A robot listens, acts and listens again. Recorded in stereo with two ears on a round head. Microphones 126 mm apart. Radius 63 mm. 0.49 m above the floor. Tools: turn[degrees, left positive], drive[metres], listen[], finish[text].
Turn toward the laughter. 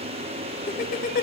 Thought: The laughter: about 65° left or 115° left.
Action: turn[65]
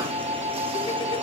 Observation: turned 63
Action: listen[]
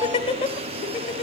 Thought: So it is at 50° left.
Action: turn[50]
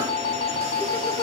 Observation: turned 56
Action: listen[]
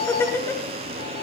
Thought: The laughter is now 20° left.
Action: turn[20]
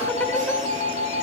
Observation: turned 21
Action: listen[]
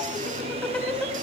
Thought: The laughter is now 10° left.
Action: turn[10]
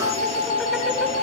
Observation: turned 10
Action: listen[]
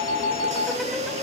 Action: listen[]
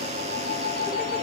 Action: finish[Facing where the laughter came from. I can't hear it now.]